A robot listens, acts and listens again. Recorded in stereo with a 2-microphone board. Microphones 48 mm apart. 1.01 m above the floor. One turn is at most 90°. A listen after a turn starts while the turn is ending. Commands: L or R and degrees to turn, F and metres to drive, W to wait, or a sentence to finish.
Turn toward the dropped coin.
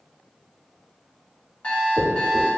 R65
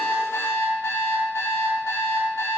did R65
W
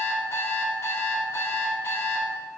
I heard a dropped coin, but can't make it out now. It was about straight ahead or 50° right.